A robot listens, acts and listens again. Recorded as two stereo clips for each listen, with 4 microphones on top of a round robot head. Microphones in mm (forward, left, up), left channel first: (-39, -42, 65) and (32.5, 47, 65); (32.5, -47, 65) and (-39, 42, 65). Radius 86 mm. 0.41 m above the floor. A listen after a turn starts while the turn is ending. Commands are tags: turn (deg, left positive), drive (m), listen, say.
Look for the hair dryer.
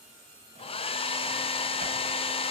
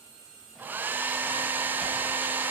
<turn deg="-160"/>
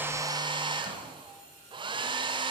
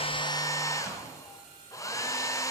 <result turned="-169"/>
<turn deg="10"/>
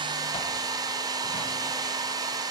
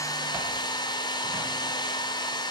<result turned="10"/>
<say>Found it: a hair dryer, straight ahead, 1 to 2 m away.</say>